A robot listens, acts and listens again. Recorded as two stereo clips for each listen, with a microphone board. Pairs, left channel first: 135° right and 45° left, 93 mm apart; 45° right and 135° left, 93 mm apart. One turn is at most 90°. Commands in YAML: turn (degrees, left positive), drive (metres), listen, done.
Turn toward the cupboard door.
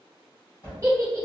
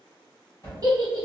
turn: -90
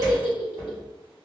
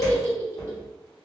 listen: true
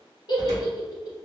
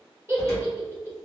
listen: true
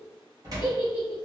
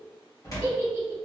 done: "Facing the cupboard door."